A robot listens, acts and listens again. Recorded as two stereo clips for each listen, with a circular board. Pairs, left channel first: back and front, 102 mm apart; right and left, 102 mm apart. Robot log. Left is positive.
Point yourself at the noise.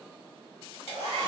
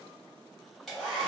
note: The hair dryer: straight behind.
cmd yaw +180
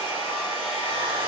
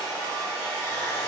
note: The hair dryer is now 20° right.
cmd yaw -20
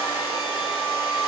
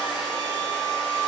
end: Found it: a hair dryer, straight ahead.